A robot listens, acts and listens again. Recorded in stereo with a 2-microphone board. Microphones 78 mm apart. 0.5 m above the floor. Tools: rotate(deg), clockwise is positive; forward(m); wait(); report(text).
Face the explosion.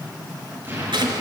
rotate(30)
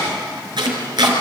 wait()
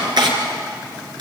report("I heard an explosion, but can't make it out now. It was about straight ahead or 120° right.")